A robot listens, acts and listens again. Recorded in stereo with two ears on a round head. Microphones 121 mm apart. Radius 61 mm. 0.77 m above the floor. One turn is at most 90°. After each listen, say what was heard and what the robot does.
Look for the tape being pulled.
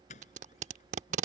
The tape being pulled: about 60° right or 120° right. Turn 60° right.
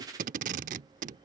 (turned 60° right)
So it is at 65° right. Turn 65° right.
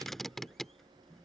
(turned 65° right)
Facing the tape being pulled.